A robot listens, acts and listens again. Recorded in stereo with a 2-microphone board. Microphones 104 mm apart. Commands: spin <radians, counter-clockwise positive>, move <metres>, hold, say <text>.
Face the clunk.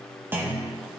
spin -0.35
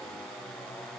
hold
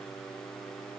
say I heard a clunk, but can't make it out now. It was about straight ahead or 140° right.